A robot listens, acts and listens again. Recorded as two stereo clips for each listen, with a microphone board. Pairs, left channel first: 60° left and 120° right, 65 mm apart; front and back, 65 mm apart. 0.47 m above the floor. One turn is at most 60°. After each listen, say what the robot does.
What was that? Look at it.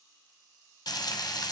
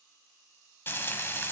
Turn 55° left.
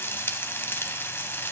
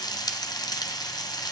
Facing the frying, 1 to 2 m away.